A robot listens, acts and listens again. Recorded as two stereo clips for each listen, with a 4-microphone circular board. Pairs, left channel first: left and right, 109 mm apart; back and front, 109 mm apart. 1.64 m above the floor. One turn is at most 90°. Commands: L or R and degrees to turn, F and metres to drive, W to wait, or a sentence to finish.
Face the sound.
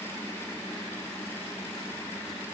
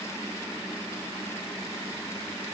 W
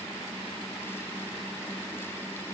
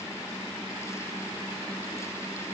W
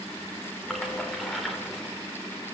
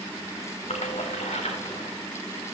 L90
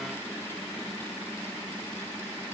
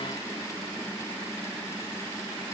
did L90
L85
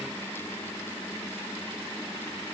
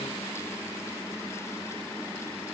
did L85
I heard a splash from this way, but can't make it out now.